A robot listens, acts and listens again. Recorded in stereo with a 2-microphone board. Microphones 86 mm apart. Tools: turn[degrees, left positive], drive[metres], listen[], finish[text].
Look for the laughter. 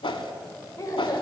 Thought: The laughter: about 45° left or 135° left.
Action: turn[45]
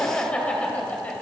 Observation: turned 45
Thought: So it is at 20° left.
Action: turn[20]
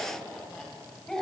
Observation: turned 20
Thought: The laughter is now 10° left.
Action: turn[10]
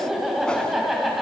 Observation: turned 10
Action: finish[Facing the laughter.]